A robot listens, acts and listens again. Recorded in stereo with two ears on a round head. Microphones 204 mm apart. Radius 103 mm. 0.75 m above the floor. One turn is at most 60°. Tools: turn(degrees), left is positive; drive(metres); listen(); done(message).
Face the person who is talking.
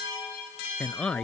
turn(degrees=30)
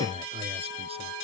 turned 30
turn(degrees=-25)
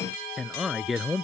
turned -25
done("Facing the man speaking.")